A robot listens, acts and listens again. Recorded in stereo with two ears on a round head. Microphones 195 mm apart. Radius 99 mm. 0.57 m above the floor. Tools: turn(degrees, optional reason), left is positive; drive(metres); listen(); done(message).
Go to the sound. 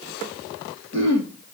turn(degrees=-55, reason="The throat clearing: about 55° right or 125° right.")
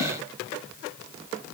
listen()
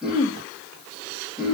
drive(metres=1.0)
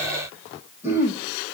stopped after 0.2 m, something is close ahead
turn(degrees=-10, reason="The throat clearing is now 10° right.")
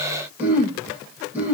done("Something is in my way. I am facing the throat clearing but have not reached it.")